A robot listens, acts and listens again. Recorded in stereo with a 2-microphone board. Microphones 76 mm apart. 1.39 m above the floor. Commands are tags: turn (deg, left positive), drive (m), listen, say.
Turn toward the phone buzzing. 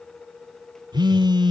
<turn deg="-70"/>
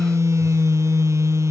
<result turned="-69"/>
<turn deg="-40"/>
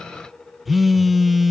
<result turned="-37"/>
<say>Found it: a phone buzzing, straight ahead.</say>